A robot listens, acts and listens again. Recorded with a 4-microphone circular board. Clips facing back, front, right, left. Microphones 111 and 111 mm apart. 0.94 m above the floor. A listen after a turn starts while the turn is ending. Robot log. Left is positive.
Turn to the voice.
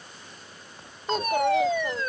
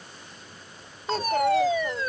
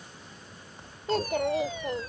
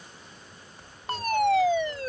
note: The child speaking: 95° right.
cmd yaw -95
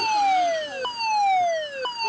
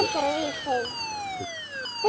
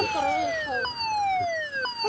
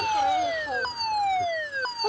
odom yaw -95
note: The child speaking is now 10° left.
cmd yaw +10
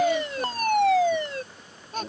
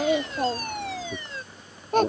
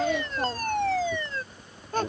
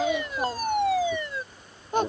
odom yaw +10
note: The child speaking is now 20° left.
cmd yaw +20
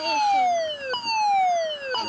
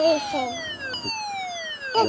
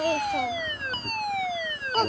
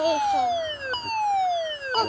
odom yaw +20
end: Found it: a child speaking, straight ahead.